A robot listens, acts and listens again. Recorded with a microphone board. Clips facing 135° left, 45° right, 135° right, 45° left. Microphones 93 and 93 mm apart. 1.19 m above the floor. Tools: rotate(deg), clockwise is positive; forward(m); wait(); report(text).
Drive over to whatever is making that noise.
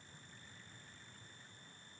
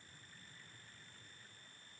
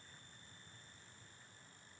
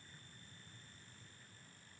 wait()
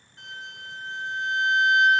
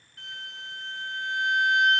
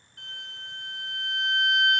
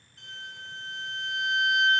rotate(165)
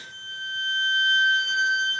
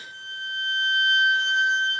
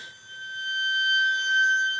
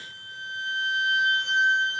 forward(1.0)
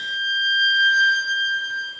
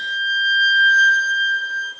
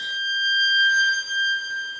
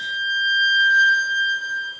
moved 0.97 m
forward(1.0)
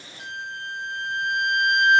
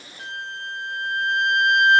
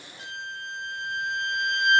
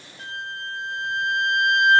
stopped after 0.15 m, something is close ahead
rotate(15)
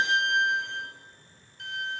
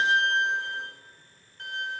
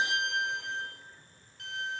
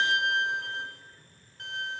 report("I am next to the violin.")